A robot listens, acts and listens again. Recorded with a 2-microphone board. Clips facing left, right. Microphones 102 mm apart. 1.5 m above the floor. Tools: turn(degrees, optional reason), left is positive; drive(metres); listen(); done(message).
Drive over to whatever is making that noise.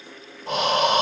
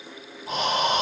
turn(degrees=75, reason="The breathing: about 75° left or 105° left.")
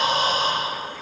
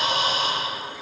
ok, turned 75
turn(degrees=35, reason="So it is at 35° left.")
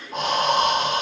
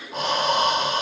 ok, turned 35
drive(metres=1.0)
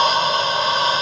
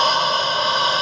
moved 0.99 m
drive(metres=1.0)
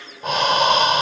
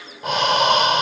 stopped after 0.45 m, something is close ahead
done("Arrived at the breathing, straight ahead.")